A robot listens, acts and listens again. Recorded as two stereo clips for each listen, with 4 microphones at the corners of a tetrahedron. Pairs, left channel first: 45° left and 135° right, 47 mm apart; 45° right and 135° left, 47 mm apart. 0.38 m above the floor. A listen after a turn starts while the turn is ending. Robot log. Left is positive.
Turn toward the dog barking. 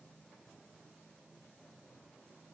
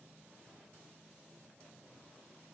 cmd idle
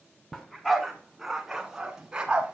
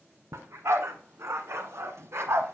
note: The dog barking: 155° left.
cmd yaw +155
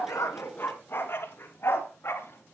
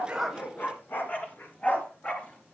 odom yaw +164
note: The dog barking is now 15° left.
cmd yaw +15
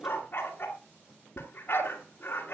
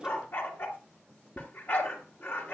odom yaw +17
end: Found it: a dog barking, straight ahead, 2 to 4 m away.